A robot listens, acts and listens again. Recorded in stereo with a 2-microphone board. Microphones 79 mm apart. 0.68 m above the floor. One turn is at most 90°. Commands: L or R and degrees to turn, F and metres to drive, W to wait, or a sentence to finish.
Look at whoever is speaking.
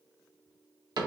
W
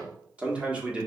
R30
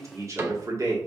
R90
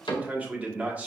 R20
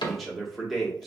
Found it: a man speaking, straight ahead.